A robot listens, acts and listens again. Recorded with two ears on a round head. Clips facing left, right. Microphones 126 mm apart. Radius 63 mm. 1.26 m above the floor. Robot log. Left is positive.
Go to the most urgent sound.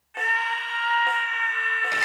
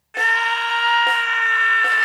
cmd yaw -90
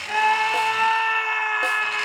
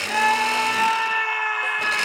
cmd fwd 1.0
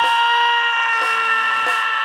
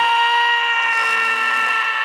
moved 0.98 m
note: The scream is now 10° right.
cmd yaw -10
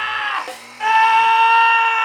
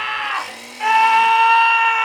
cmd fwd 1.0
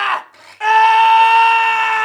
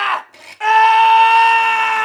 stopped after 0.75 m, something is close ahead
end: Arrived at the scream, straight ahead.